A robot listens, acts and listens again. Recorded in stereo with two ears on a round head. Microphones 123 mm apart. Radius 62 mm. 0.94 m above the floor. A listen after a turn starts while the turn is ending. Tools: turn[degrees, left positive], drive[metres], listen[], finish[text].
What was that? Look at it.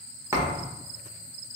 Thought: The thud: about 20° right or 160° right.
Action: turn[-20]
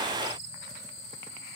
Action: listen[]
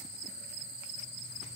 Action: finish[I heard a thud, but can't make it out now. It was about straight ahead or 140° right.]